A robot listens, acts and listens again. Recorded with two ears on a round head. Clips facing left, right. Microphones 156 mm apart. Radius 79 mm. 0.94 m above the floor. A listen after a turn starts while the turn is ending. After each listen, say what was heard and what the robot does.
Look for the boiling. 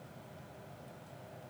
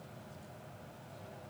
Keep listening.
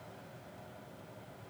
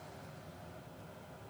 Keep listening.
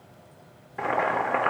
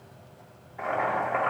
The boiling: about 75° left or 105° left. Turn 75° left.
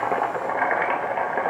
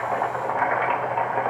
So it is at 20° left. Turn 20° left.
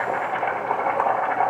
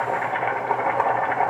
Facing the boiling, 1 to 2 m away.